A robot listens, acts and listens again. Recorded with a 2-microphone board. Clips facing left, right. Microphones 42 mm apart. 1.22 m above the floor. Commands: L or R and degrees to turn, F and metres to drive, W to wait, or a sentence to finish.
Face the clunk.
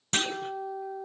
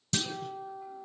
L45
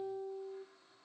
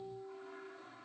W
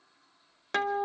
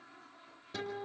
I heard a clunk, but can't make it out now. It was about straight ahead or 90° left.